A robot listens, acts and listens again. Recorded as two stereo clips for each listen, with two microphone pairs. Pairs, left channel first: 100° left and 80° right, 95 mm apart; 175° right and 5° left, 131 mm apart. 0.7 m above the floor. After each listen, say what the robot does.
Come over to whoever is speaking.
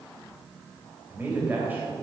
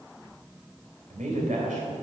Drive 1.0 m forward.
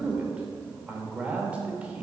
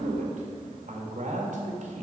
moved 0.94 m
Drive 1.0 m forward.
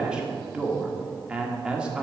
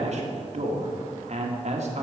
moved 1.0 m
Drive 1.0 m forward.
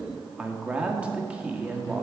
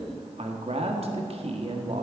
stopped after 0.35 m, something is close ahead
I am next to the man speaking.